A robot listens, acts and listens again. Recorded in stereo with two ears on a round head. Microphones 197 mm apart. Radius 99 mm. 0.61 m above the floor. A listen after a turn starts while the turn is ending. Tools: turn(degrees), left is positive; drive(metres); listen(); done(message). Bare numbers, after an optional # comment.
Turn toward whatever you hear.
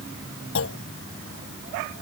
# The clunk: about 60° left or 120° left.
turn(60)
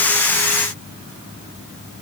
listen()
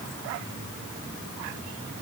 done("I heard a clunk, but can't make it out now. It was about straight ahead or 60° left.")